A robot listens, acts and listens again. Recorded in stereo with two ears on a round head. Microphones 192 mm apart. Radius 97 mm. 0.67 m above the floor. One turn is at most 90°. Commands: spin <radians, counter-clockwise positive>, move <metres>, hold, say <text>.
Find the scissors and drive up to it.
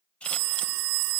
spin 0.52
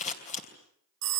spin 1.57
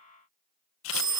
spin 1.22
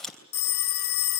move 1.0
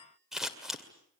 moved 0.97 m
move 1.0
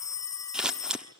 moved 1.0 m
move 1.0
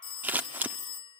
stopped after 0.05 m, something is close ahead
spin -0.17
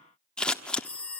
say I am next to the scissors.